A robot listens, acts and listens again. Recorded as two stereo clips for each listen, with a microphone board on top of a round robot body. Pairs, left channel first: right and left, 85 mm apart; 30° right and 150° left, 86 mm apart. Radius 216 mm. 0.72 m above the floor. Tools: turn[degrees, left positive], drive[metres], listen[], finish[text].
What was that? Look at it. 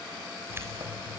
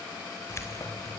Thought: The keys jangling: 25° left.
Action: turn[25]
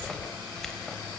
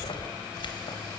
Action: finish[Facing the keys jangling.]